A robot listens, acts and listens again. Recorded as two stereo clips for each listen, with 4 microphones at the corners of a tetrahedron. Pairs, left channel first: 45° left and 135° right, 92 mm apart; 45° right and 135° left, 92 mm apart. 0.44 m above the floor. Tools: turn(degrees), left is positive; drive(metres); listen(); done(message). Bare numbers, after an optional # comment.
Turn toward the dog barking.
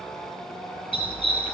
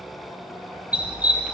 # The dog barking: 60° left.
turn(60)
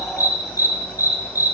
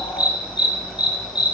# The dog barking is now 10° right.
turn(-10)
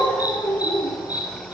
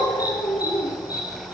done("Facing the dog barking, over 4 m away.")